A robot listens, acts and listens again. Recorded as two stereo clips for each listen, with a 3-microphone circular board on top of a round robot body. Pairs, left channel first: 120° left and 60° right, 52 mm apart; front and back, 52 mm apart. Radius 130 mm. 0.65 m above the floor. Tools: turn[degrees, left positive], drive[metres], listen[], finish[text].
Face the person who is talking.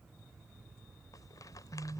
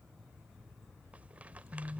Action: listen[]
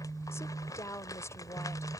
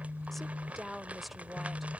Thought: The woman speaking: 90° left.
Action: turn[90]
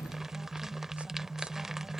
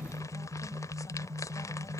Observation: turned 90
Action: listen[]
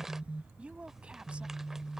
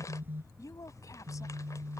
Thought: The woman speaking is now 10° left.
Action: turn[10]
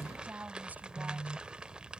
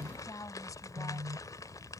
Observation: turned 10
Action: finish[Found it: a woman speaking, straight ahead.]